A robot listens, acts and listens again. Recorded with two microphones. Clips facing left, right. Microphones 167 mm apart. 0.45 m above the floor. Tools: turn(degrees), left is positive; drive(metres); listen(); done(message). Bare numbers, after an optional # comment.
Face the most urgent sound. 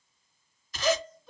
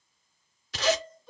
turn(30)
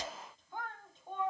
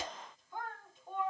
# So it is at 155° left.
turn(155)
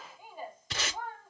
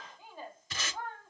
# The shout is now 15° left.
turn(15)
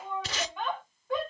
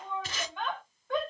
done("Found it: a shout, straight ahead, 1 to 2 m away.")